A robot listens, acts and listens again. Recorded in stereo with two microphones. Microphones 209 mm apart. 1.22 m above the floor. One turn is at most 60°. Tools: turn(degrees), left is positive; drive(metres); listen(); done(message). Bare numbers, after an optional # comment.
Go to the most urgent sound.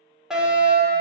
turn(-30)
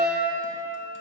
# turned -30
# So it is at 145° right.
turn(-60)
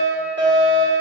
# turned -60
# The fire alarm is now 75° right.
turn(-60)
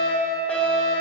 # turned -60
drive(1.0)
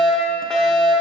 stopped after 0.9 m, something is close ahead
done("Arrived at the fire alarm, straight ahead.")